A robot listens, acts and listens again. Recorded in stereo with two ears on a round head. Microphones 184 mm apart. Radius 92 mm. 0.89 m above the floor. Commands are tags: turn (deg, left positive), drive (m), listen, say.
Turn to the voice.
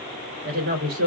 <turn deg="-50"/>
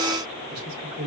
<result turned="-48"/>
<turn deg="-80"/>
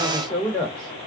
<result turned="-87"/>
<say>Found it: a woman speaking, straight ahead.</say>